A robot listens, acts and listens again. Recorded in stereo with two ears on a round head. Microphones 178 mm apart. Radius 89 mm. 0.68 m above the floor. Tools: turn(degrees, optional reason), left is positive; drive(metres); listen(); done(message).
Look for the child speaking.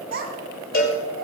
turn(degrees=-55, reason="The child speaking: about 55° right or 125° right.")
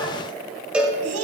turn(degrees=-80, reason="So it is at 80° right.")
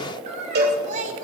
turn(degrees=-40, reason="The child speaking is now 40° right.")
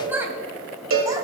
turn(degrees=-10, reason="The child speaking is now 10° right.")
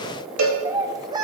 turn(degrees=-20, reason="The child speaking is now 20° right.")
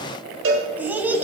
turn(degrees=-10, reason="The child speaking is now 10° right.")
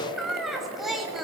done("Facing the child speaking.")